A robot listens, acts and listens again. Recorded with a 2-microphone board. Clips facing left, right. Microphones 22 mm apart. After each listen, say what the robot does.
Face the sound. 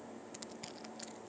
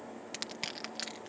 Turn 90° right.
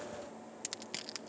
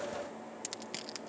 Facing the crushing.